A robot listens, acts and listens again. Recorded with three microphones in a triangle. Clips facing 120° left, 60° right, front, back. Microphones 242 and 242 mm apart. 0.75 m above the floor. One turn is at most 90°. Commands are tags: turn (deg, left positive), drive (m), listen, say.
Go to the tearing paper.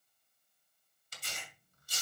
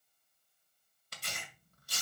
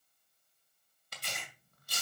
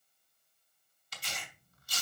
<turn deg="-35"/>
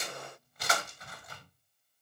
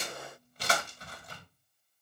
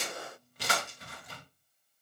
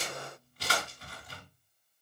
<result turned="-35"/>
<drive m="1.0"/>
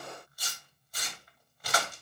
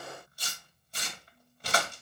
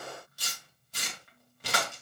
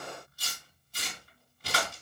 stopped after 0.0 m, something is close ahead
<say>Something is in my way. I am facing the tearing paper but have not reached it.</say>